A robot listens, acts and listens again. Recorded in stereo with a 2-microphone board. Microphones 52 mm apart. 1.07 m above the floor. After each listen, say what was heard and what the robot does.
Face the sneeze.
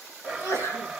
Turn 90° left.
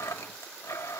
I heard a sneeze from this way, but can't make it out now.